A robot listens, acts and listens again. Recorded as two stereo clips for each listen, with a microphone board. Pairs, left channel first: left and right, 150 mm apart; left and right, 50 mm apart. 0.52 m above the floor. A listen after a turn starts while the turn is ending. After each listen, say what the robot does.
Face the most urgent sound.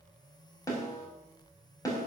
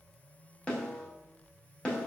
Keep listening.
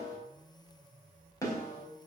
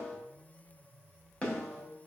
Keep listening.
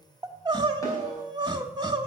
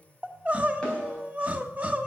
Turn 30° right.
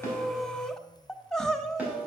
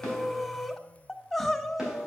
Facing the crying.